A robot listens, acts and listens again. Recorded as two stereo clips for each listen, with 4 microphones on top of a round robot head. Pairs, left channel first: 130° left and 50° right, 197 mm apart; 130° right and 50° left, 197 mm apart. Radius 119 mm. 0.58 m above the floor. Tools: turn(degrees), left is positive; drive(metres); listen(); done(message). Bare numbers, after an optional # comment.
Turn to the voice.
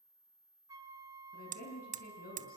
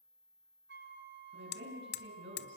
# The woman speaking: 85° left.
turn(85)
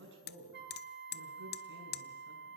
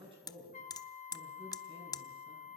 # The woman speaking is now 15° right.
turn(-15)
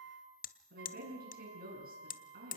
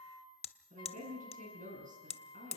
done("Found it: a woman speaking, straight ahead.")